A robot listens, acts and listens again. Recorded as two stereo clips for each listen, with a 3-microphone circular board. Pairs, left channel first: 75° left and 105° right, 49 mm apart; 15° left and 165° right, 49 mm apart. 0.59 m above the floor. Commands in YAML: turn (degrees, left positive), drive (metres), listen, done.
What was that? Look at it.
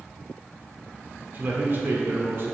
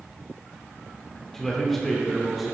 turn: -80
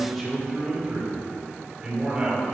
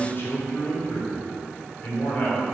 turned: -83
turn: -35
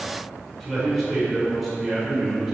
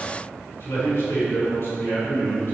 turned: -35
turn: -15
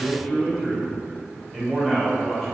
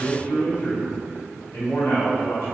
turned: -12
done: "Facing the man speaking, 2 to 4 m away."